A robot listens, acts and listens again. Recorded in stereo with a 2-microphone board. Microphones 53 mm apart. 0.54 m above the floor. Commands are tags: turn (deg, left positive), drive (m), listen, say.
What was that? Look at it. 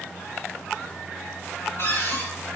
<turn deg="50"/>
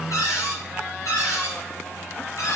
<turn deg="80"/>
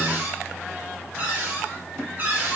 <turn deg="-35"/>
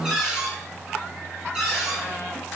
<turn deg="-10"/>
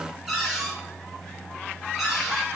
<say>Found it: a cupboard door, straight ahead, over 4 m away.</say>